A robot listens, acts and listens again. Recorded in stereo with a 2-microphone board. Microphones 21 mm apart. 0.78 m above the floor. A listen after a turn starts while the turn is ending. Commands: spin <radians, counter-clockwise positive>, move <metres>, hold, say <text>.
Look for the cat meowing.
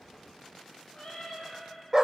spin 0.96
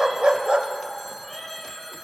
say Facing the cat meowing, over 4 m away.